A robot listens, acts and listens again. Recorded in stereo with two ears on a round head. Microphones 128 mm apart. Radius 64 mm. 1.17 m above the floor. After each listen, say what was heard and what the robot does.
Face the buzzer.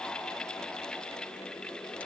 Keep listening.
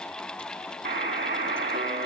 The buzzer: about 70° right or 110° right. Turn 70° right.
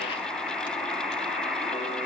Found it: a buzzer, straight ahead.